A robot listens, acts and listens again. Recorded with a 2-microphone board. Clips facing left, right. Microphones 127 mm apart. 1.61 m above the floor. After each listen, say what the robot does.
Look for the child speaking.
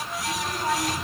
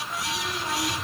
Turn 50° left.
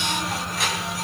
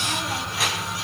Facing the child speaking.